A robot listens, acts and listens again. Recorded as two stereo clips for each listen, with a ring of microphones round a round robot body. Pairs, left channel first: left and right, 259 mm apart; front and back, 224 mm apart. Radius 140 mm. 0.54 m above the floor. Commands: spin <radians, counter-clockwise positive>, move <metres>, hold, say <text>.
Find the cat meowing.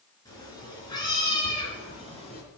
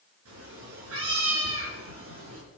spin 2.79
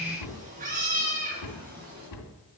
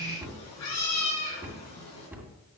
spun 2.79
spin -0.61
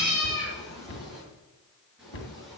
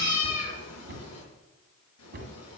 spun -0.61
say Found it: a cat meowing, straight ahead.